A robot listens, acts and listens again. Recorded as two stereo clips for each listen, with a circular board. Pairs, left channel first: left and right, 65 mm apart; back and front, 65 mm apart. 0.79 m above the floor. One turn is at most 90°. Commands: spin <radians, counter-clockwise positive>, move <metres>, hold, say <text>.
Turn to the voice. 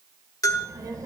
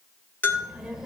spin -1.48
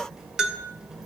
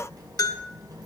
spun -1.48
spin -0.17
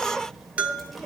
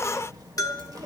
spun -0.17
say Facing the child speaking, 1 to 2 m away.